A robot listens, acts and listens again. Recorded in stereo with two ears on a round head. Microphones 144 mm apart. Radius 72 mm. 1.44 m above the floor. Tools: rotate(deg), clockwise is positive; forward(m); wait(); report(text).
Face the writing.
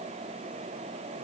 wait()
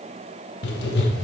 rotate(-75)
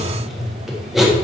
report("Found it: writing, straight ahead.")